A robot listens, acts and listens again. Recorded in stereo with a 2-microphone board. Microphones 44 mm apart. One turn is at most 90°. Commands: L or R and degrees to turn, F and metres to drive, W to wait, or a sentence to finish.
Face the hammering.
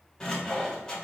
W
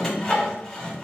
W
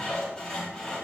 I can't make out hammering, only sawing.